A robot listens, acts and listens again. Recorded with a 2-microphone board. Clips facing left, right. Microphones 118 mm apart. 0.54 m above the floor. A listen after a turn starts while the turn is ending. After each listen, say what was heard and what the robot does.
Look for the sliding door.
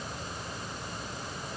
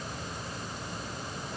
Keep listening.
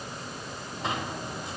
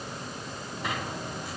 The sliding door: about 25° left or 155° left. Turn 25° left.
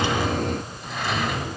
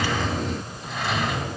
Facing the sliding door.